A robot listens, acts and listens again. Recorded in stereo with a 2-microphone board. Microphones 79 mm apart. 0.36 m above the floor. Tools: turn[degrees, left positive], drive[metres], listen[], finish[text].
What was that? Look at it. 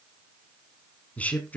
Thought: The man speaking: about 20° left or 160° left.
Action: turn[20]
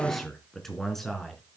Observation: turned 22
Action: turn[30]
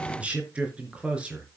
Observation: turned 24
Thought: So it is at 15° right.
Action: turn[-15]
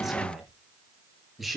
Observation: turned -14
Action: finish[Found it: a man speaking, straight ahead, over 4 m away.]